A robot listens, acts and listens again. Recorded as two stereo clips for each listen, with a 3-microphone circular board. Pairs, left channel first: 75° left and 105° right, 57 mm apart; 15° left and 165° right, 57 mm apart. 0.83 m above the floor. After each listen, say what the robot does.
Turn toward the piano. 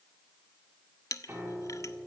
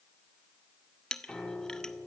Turn 60° right.
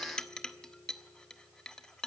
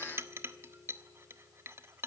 Facing the piano, over 4 m away.